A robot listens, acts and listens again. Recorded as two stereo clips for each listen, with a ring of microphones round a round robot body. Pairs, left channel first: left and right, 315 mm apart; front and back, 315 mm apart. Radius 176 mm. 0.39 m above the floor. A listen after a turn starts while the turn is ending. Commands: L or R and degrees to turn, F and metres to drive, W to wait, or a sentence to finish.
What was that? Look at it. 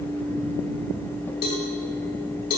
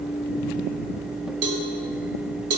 L150
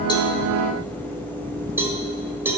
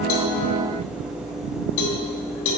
R10
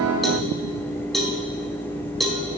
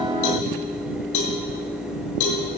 Facing the cowbell, 1 to 2 m away.